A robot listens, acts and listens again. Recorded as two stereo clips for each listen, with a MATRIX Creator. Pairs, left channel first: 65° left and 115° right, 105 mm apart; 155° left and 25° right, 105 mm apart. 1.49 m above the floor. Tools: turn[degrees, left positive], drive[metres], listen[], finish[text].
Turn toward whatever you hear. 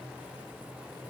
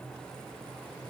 Action: listen[]
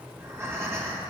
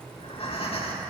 Thought: The breathing: straight behind.
Action: turn[180]
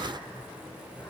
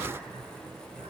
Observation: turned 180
Action: listen[]
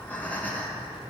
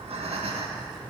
Action: finish[Facing the breathing, 1 to 2 m away.]